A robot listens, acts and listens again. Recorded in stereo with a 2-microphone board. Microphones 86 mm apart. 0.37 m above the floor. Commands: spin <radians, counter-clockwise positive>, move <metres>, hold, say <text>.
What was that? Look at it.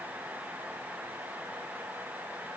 hold
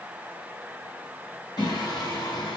spin 0.87
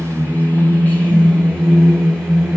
say Facing the singing.